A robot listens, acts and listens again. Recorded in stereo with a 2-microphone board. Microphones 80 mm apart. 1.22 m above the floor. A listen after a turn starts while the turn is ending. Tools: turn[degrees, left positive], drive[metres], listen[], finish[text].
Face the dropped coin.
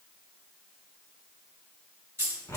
Thought: The dropped coin: about 35° right or 145° right.
Action: turn[-35]
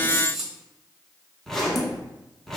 Thought: So it is at 10° right.
Action: turn[-10]
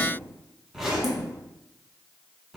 Action: finish[Facing where the dropped coin came from. I can't hear it now.]